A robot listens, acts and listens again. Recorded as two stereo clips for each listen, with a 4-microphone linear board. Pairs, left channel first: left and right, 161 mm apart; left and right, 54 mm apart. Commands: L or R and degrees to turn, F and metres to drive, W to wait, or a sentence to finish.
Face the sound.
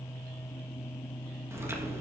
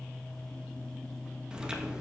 R15
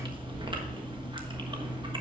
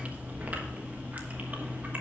R150
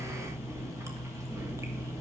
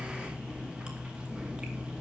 R20
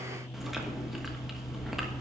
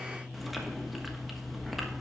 Found it: chewing, straight ahead, 1 to 2 m away.